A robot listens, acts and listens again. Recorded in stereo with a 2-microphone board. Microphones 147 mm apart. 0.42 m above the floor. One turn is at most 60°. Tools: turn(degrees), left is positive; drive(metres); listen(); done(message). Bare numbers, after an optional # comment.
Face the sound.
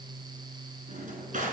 # The drawer: about 60° right or 120° right.
turn(-60)
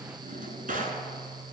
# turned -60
# So it is at 65° right.
turn(-60)
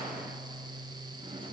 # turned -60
listen()
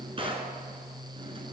# The drawer is now 35° right.
turn(-35)
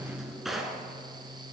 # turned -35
done("Facing the drawer, 1 to 2 m away.")